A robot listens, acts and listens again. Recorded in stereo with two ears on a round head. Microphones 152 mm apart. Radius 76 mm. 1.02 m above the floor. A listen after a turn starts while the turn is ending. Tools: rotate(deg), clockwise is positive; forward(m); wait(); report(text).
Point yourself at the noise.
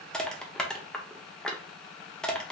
rotate(-30)
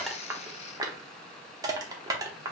rotate(25)
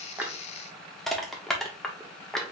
report("Found it: crushing, straight ahead.")